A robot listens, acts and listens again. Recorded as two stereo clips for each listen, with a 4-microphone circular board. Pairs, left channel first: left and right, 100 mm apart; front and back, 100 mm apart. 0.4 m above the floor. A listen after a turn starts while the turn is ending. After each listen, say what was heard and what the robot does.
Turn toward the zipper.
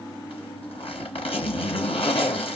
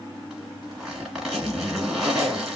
The zipper: 95° left. Turn 95° left.
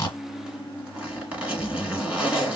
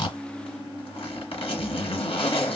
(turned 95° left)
The zipper is now 10° right. Turn 10° right.
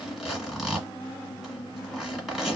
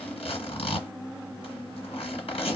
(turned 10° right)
Facing the zipper.